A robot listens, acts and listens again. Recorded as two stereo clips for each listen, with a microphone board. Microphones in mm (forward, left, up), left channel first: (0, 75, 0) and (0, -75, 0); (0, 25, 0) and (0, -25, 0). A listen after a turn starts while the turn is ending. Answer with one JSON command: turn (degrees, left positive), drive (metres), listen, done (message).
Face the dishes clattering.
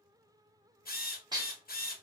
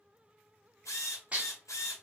{"turn": -30}
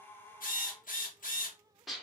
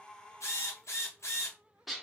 {"done": "Found it: dishes clattering, straight ahead, under 1 m away."}